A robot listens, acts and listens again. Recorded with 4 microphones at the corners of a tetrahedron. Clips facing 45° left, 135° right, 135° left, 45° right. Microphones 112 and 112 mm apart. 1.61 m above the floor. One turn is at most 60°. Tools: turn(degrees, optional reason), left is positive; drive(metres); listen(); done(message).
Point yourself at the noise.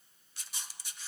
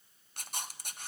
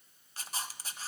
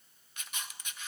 turn(degrees=-60, reason="The camera shutter: 170° right.")
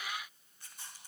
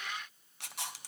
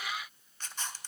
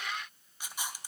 turn(degrees=-60, reason="The camera shutter is now 125° right.")
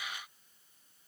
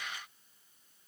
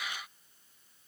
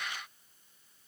turn(degrees=-60, reason="Nothing new. It was at 65° right.")
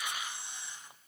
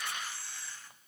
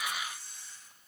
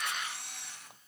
turn(degrees=-25, reason="The camera shutter is now 25° right.")
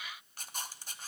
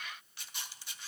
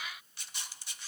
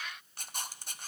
done("Facing the camera shutter.")